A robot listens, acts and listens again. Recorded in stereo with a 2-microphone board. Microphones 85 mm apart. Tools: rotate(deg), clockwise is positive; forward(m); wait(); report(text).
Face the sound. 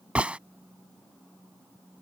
rotate(30)
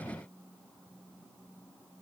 wait()
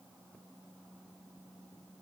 report("I heard a gunshot, but can't make it out now. It was about 15° left or 135° right.")